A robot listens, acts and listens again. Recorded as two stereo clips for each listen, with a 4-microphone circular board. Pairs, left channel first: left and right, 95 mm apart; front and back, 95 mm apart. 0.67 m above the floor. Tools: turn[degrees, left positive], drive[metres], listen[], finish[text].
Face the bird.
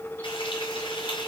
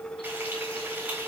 Action: listen[]
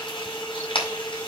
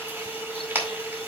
Action: listen[]
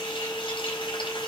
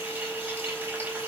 Action: finish[I can't make out a bird, only frying.]